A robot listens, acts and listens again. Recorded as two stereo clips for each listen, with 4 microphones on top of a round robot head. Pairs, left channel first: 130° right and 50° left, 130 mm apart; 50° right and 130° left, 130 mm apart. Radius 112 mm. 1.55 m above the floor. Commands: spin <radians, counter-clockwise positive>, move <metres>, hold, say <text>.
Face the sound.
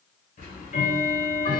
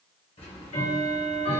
spin -1.66
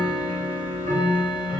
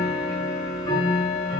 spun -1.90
spin 0.26
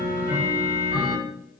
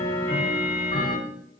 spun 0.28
say Facing the ticking, under 1 m away.